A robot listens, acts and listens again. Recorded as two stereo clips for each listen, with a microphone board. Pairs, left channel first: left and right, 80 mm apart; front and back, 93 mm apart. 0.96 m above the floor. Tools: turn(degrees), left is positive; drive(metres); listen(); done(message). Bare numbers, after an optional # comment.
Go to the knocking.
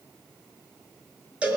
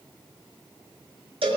listen()
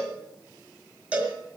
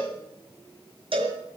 listen()
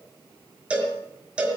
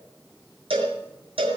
done("I can't make out knocking to turn to.")